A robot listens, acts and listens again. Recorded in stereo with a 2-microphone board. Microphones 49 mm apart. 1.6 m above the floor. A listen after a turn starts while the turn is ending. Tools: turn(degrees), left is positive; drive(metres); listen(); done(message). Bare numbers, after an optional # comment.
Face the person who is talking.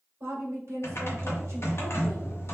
# The woman speaking: about 70° right or 110° right.
turn(-70)
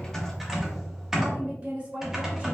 # So it is at 35° right.
turn(-35)
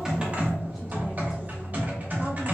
listen()
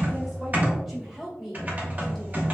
# The woman speaking is now 10° right.
turn(-10)
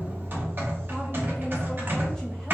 listen()
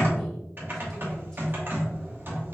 listen()
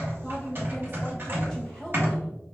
done("I heard a woman speaking from this way, but can't make it out now.")